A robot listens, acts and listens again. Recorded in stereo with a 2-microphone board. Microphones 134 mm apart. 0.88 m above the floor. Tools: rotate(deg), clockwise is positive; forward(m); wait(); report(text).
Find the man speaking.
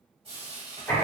wait()
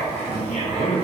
rotate(-55)
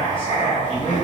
rotate(-50)
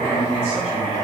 rotate(-45)
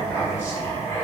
wait()
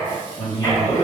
rotate(-35)
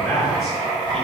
report("Facing the man speaking, 1 to 2 m away.")